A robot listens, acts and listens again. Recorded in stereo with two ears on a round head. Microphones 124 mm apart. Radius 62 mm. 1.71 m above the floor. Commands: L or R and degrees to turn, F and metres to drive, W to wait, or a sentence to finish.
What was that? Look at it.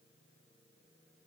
W
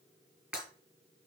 R30
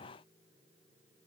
W
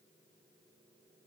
I heard breaking glass, but can't make it out now. It was about 20° left or 140° right.